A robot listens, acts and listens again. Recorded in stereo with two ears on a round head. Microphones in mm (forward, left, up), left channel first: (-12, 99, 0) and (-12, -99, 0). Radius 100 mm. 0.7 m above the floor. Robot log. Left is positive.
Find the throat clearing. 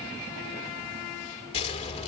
cmd idle
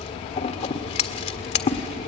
cmd idle
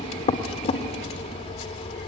end: I can't make out throat clearing, only scissors.